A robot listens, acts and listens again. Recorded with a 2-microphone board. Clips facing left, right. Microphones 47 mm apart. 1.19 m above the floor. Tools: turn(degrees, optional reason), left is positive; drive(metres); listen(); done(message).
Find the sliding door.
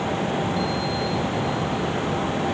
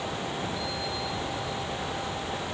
listen()
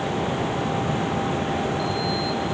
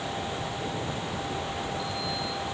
listen()
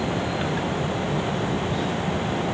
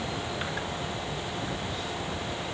done("I can't make out a sliding door.")